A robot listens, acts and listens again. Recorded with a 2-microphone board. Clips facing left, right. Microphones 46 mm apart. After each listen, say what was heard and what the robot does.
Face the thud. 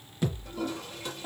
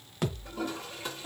The thud: about 60° right or 120° right. Turn 60° right.
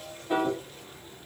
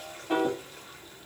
Keep listening.
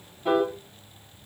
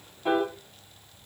I heard a thud, but can't make it out now. It was about straight ahead or 60° right.